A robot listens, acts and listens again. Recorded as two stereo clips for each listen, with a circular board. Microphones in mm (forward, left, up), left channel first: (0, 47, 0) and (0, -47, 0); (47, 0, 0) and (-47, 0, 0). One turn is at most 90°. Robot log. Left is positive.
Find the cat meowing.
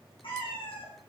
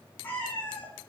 note: The cat meowing: 75° left.
cmd yaw +75
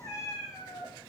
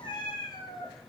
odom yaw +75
note: The cat meowing is now 45° left.
cmd yaw +45
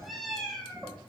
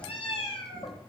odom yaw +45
note: The cat meowing is now 10° left.
cmd yaw +10
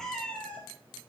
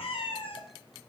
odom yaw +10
note: The cat meowing is now 15° left.
cmd yaw +15
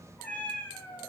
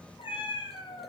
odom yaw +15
note: The cat meowing is now 25° left.
cmd yaw +25
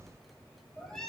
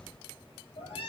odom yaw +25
end: Found it: a cat meowing, straight ahead.